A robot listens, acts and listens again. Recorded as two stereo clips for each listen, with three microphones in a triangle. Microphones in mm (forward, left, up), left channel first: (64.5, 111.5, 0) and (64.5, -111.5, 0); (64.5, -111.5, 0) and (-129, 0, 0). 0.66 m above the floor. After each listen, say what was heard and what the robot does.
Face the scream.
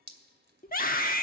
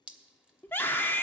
The scream: 50° left. Turn 50° left.
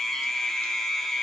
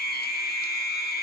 Found it: a scream, straight ahead, 1 to 2 m away.